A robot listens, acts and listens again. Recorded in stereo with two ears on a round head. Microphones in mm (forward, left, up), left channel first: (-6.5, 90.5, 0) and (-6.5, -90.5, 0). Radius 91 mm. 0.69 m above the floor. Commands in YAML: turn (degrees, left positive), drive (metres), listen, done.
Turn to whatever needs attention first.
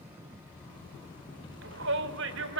turn: -70
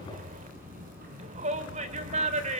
turn: -35
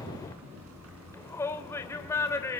turn: 15
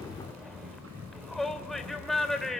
done: "Found it: a shout, straight ahead, 2 to 4 m away."